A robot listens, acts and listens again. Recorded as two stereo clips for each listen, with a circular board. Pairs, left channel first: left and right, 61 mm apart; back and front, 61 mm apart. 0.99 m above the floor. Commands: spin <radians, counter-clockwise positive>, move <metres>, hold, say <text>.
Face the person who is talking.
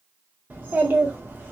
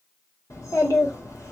spin -2.62
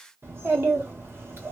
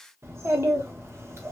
spin -0.70
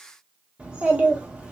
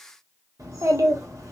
spin -0.35
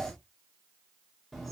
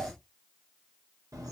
say Found it: a child speaking, straight ahead, 1 to 2 m away.